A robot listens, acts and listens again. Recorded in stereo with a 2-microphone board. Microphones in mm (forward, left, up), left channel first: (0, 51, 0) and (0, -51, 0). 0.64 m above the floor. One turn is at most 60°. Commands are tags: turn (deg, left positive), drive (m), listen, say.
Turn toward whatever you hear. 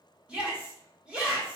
<turn deg="-30"/>
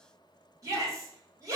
<turn deg="-60"/>
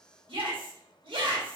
<turn deg="-60"/>
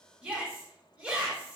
<turn deg="-10"/>
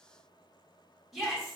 <say>Facing the shout, 1 to 2 m away.</say>